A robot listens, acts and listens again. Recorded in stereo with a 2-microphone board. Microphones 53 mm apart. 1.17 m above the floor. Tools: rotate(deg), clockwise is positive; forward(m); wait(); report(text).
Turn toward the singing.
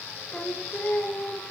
rotate(-20)
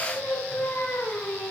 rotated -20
rotate(-35)
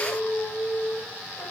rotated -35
rotate(-110)
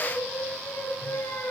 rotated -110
rotate(-55)
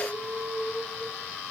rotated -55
report("Found it: singing, straight ahead.")